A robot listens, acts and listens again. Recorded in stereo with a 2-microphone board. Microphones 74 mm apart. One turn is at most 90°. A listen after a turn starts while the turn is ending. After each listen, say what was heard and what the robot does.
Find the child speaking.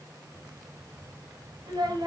The child speaking: about 75° right or 105° right. Turn 75° right.
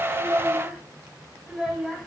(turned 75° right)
Found it: a child speaking, straight ahead, 2 to 4 m away.